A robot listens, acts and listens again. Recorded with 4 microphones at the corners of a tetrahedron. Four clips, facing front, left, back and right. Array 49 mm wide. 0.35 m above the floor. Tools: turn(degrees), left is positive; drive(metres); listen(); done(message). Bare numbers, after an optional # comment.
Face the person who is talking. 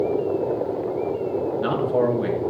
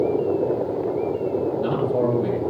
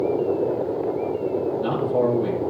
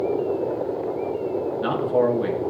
# The man speaking: 45° right.
turn(-45)
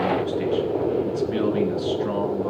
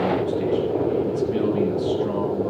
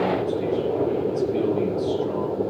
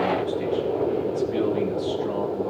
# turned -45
listen()
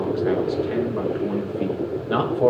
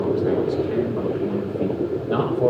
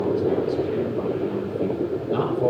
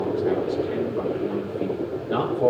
done("Facing the man speaking.")